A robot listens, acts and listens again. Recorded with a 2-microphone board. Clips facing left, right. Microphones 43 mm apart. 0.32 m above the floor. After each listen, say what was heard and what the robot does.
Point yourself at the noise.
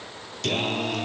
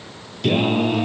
Turn 30° right.
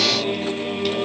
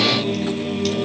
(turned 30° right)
So it is at 15° left. Turn 15° left.
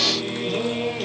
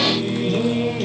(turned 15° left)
Facing the singing.